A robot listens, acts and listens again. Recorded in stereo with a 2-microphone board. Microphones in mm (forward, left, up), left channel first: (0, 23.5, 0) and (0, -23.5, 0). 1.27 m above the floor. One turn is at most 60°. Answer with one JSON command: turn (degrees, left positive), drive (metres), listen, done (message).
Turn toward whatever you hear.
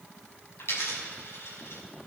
{"turn": 60}
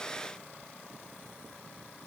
{"listen": true}
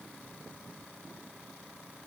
{"done": "I heard a dropped coin, but can't make it out now. It was about straight ahead or 60° left."}